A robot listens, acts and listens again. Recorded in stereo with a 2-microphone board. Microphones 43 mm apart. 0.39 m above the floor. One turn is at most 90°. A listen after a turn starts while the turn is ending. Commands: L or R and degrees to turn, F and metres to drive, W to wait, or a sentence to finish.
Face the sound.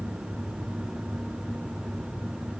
W
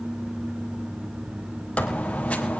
L30
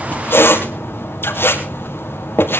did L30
L90
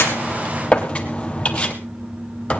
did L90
L30
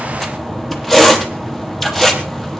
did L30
L10
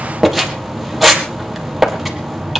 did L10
Facing the squeak.